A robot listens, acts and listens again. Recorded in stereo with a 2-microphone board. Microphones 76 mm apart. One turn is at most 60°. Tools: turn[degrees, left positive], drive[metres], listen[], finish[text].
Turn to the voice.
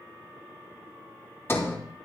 Action: listen[]
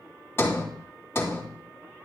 Action: listen[]
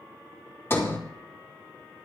Action: finish[I can't make out anyone speaking, only a sliding door.]